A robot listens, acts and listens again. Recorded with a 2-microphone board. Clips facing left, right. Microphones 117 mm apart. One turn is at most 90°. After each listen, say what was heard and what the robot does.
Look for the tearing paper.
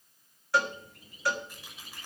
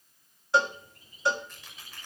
Turn 30° left.
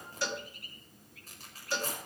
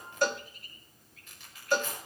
So it is at 140° left. Turn 90° left.
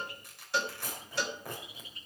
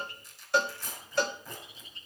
The tearing paper is now 70° left. Turn 70° left.
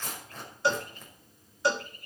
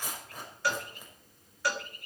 The tearing paper is now 10° right. Turn 10° right.
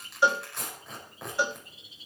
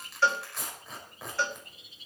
Found it: tearing paper, straight ahead, over 4 m away.